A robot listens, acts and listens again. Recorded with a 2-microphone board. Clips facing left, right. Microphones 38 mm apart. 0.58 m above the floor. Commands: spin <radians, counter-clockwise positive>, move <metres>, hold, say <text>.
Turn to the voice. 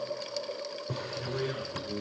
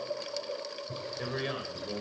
spin -0.87
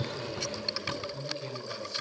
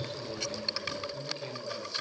spin -0.17
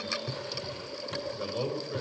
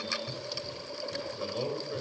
say Facing the man speaking.